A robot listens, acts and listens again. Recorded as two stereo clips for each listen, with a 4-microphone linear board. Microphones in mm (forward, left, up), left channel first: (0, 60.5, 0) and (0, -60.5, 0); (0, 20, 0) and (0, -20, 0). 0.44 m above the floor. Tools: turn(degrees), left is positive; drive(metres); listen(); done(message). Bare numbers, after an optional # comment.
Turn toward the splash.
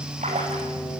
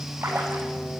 turn(-90)
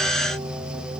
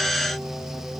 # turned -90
done("I heard a splash from this way, but can't make it out now.")